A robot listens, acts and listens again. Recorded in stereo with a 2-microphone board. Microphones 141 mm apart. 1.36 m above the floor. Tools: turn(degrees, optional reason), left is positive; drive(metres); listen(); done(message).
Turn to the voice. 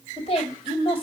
turn(degrees=40, reason="The woman speaking: about 40° left or 140° left.")
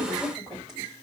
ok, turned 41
done("Facing the woman speaking, 2 to 4 m away.")